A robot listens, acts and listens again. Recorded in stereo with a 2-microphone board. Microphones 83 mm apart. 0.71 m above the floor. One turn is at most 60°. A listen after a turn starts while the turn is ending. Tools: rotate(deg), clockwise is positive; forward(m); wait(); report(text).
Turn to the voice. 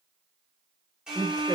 rotate(40)
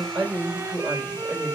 report("Facing the woman speaking, 2 to 4 m away.")